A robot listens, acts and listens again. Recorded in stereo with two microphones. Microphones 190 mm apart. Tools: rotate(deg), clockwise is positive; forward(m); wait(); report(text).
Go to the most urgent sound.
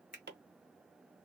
wait()
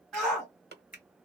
rotate(-30)
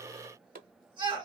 rotate(25)
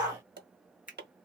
forward(1.0)
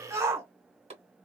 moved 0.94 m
rotate(15)
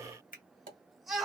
forward(1.0)
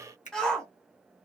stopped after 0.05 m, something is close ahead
report("I am next to the shout.")